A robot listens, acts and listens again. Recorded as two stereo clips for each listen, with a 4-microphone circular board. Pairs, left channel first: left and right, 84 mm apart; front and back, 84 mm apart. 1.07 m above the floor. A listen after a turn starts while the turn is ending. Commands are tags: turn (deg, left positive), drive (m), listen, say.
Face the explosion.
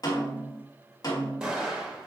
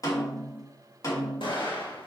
<turn deg="-10"/>
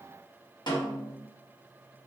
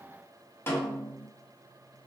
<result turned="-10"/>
<say>Facing where the explosion came from. I can't hear it now.</say>